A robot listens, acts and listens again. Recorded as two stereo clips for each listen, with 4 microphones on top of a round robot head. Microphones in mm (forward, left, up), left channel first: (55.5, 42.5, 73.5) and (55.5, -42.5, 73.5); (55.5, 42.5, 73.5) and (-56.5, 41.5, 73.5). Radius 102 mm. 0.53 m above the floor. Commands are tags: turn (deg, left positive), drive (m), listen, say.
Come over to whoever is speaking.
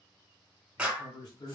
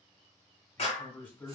<turn deg="75"/>
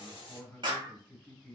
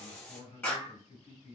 <turn deg="15"/>
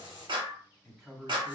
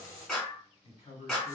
<drive m="1.0"/>
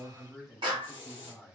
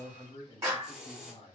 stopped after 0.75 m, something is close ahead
<say>I am next to the man speaking.</say>